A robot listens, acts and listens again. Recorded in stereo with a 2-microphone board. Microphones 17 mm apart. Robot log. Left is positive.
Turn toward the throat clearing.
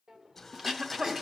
note: The throat clearing: about 25° right or 155° right.
cmd yaw -25
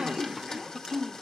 note: So it is at 125° right.
cmd yaw -125
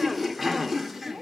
end: Facing the throat clearing.